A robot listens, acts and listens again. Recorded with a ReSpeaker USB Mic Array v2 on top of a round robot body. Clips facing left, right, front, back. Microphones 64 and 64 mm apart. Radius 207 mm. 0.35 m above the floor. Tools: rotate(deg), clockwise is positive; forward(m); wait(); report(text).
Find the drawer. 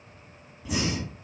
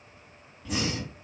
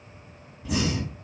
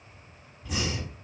wait()
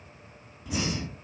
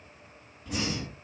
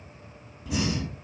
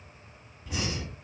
wait()
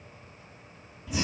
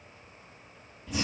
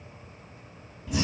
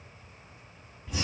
report("I can't make out a drawer, only breathing.")